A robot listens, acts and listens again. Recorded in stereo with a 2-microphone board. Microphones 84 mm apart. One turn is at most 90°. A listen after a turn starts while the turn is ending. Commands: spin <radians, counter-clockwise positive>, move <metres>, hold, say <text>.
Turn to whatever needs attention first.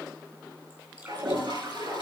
hold
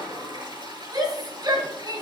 spin -0.96
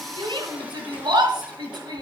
spin -1.13
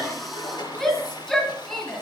say Facing the shout.